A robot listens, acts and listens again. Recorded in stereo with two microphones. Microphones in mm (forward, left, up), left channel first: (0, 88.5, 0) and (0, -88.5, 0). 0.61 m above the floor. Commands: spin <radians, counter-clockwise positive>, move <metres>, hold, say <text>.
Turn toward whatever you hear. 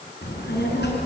spin 1.57
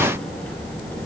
spin 0.17
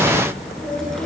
say Found it: a child speaking, straight ahead.